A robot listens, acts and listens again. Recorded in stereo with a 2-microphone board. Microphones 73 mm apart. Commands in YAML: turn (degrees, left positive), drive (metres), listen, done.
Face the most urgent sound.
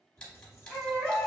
turn: 30
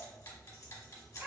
turn: -15
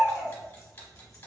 done: "Facing the baby crying."